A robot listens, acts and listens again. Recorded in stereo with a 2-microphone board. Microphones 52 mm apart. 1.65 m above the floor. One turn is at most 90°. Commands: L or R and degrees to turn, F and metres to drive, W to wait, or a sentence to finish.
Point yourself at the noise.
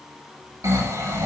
R90
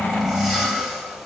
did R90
Facing the snoring.